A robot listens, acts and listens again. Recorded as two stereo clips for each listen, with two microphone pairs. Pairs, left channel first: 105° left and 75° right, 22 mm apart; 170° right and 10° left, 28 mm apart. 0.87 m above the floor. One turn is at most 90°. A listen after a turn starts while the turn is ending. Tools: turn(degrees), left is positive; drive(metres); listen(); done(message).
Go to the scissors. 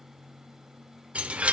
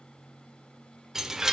listen()
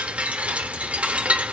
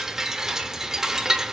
listen()
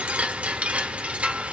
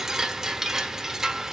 done("I can't make out scissors, only a chime.")